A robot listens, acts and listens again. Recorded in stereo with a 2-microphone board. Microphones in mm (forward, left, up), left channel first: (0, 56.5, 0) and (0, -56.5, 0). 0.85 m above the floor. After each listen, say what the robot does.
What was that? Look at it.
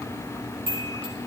Turn 60° left.
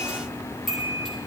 Facing the chime.